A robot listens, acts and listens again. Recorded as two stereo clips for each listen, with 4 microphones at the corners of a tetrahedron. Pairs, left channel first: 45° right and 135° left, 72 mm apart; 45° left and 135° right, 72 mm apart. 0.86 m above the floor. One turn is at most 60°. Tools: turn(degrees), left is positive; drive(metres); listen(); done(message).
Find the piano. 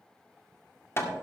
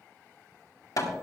listen()
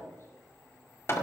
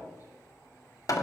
listen()
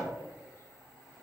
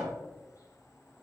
done("I can't make out a piano to turn to.")